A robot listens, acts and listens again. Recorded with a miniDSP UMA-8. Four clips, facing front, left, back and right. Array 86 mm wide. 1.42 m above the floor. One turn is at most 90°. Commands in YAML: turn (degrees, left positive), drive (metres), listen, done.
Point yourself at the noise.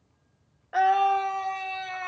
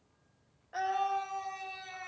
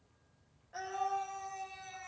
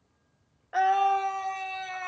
turn: -35
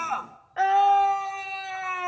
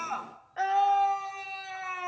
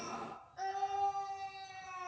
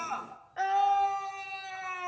done: "Facing the scream."